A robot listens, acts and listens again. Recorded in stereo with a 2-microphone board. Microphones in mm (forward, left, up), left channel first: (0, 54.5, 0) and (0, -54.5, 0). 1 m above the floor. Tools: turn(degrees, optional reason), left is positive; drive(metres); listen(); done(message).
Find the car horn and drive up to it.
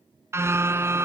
turn(degrees=-25, reason="The car horn: about 25° right or 155° right.")
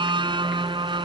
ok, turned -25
turn(degrees=-130, reason="So it is at 130° right.")
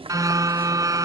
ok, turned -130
turn(degrees=-30, reason="The car horn is now 30° right.")
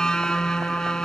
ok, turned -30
drive(metres=1.0)
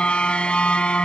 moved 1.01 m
turn(degrees=10, reason="The car horn is now 10° left.")
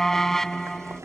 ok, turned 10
drive(metres=1.0)
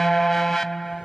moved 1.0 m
drive(metres=1.0)
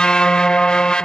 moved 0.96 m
turn(degrees=10, reason="The car horn is now 10° left.")
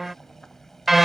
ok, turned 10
drive(metres=1.0)
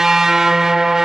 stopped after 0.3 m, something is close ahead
done("I am next to the car horn.")